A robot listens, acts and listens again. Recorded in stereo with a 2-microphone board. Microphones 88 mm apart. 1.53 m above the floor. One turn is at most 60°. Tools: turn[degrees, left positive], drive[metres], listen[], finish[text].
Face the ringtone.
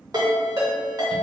Thought: The ringtone: about 45° right or 135° right.
Action: turn[-45]
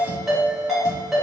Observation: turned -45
Action: finish[Facing the ringtone, 1 to 2 m away.]